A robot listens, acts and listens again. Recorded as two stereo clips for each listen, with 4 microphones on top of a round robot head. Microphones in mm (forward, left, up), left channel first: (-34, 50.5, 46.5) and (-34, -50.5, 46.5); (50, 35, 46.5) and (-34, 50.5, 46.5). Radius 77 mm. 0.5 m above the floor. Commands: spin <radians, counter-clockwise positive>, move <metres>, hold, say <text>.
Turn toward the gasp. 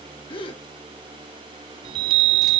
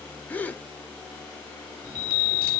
spin 1.05
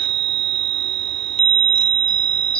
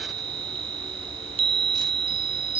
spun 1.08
say Facing where the gasp came from. I can't hear it now.